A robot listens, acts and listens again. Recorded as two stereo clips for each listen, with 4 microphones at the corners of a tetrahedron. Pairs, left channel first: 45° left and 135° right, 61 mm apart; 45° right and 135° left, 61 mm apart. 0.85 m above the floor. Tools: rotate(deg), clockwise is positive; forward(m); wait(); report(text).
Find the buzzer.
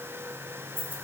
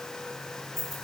wait()
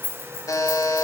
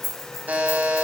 rotate(-70)
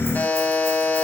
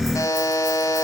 rotate(20)
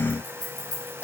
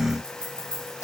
report("Found it: a buzzer, straight ahead.")